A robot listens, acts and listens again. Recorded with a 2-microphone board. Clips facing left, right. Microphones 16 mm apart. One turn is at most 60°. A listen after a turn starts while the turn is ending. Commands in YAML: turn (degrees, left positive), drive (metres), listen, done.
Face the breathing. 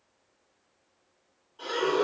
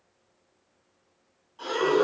turn: -25
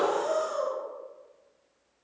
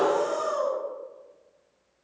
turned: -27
turn: -60
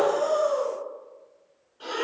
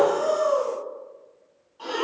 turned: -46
turn: -60
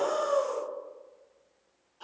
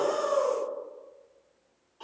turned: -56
turn: -20
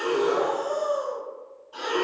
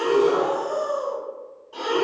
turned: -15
done: "Found it: breathing, straight ahead, 1 to 2 m away."